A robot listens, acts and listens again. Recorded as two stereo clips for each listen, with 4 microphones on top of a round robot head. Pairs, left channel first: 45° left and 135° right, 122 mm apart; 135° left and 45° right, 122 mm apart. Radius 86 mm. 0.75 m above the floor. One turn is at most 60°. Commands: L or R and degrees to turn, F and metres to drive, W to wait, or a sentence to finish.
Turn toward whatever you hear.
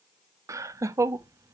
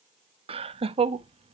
R60
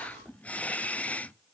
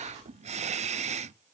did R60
R35
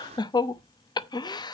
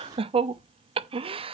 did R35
R10
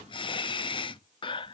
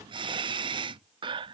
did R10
Found it: laughter, straight ahead.